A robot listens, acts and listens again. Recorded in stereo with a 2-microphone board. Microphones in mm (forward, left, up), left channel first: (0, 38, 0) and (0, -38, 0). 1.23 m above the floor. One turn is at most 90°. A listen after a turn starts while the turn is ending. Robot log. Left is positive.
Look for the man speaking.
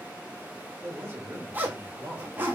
note: The man speaking: about 25° right or 155° right.
cmd yaw -25
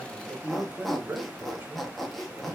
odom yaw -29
note: The man speaking: about 20° right or 160° right.
cmd yaw -20
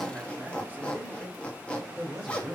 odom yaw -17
note: The man speaking: about 20° right or 160° right.
cmd yaw -20
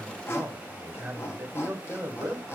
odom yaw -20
note: The man speaking: about 35° right or 145° right.
cmd yaw -35
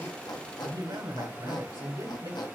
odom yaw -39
note: So it is at 110° right.
cmd yaw -90
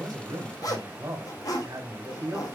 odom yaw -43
note: The man speaking is now 55° right.
cmd yaw -55
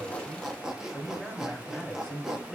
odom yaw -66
note: The man speaking is now 10° left.
cmd yaw +10
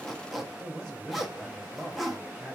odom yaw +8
end: Facing the man speaking.